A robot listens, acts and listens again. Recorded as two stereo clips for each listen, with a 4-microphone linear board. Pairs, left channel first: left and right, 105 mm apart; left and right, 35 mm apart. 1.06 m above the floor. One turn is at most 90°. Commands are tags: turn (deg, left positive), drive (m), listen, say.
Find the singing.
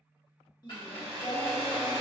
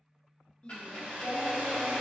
<turn deg="35"/>
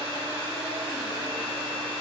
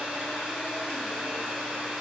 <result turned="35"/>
<listen/>
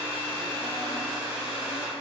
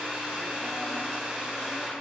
<listen/>
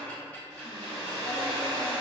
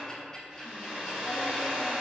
<say>I heard singing, but can't make it out now. It was about straight ahead or 110° left.</say>